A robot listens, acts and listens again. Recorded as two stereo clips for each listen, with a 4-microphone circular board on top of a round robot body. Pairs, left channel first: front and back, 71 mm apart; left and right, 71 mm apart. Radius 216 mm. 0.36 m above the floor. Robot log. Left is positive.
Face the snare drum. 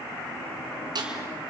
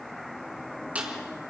note: The snare drum: 160° right.
cmd yaw -160
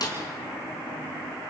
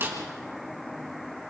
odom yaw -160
note: The snare drum is now 30° right.
cmd yaw -30
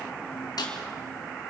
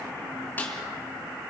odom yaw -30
note: The snare drum is now 25° left.
cmd yaw +25
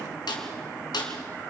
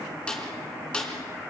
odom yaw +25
note: The snare drum is now 15° left.
cmd yaw +15
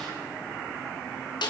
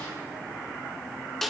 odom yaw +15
end: Found it: a snare drum, straight ahead.